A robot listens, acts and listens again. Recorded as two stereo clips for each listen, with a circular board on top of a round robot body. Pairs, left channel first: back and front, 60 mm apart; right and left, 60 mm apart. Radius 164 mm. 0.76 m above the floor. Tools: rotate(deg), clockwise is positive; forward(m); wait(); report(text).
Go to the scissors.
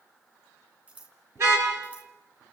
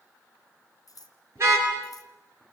rotate(70)
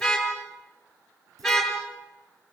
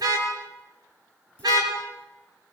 wait()
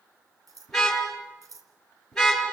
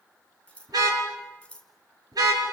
rotate(15)
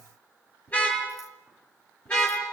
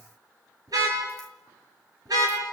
wait()
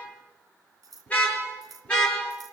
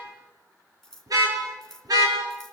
forward(1.0)
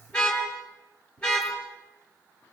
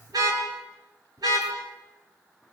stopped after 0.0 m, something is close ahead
wait()
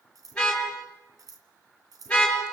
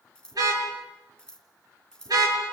rotate(10)
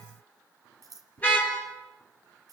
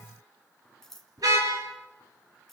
report("Blocked. The scissors is further on, straight ahead.")